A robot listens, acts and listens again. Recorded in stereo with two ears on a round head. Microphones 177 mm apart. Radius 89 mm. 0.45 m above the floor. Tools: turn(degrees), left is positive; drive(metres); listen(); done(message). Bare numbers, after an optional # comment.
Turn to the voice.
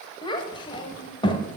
# The child speaking: about 25° left or 155° left.
turn(25)
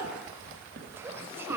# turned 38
# So it is at 15° right.
turn(-15)
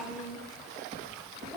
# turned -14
done("Facing the child speaking, 1 to 2 m away.")